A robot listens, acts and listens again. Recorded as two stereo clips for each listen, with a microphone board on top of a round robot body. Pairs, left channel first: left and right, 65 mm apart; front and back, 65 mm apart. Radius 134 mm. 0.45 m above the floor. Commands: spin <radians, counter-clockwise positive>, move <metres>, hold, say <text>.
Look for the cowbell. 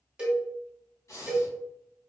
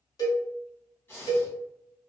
spin -0.26
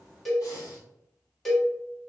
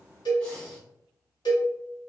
say Found it: a cowbell, straight ahead.